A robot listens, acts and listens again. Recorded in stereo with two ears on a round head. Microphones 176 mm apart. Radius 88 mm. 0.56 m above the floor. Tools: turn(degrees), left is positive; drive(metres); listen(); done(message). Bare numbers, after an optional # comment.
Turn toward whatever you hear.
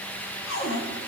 # The cupboard door: about 70° left or 110° left.
turn(70)
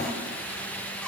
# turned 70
listen()
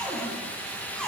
done("Facing the cupboard door.")